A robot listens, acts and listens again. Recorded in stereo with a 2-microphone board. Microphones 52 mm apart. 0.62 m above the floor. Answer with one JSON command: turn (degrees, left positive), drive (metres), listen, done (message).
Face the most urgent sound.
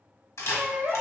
{"turn": -45}
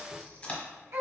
{"turn": -90}
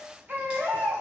{"turn": -45}
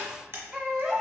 {"turn": -15}
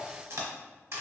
{"listen": true}
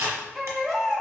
{"done": "Found it: a baby crying, straight ahead, 1 to 2 m away."}